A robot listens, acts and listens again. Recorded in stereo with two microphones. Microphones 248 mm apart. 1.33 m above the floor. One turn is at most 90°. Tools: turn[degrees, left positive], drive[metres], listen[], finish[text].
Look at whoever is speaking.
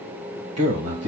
Action: turn[-90]
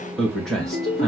Action: finish[Facing the man speaking, 1 to 2 m away.]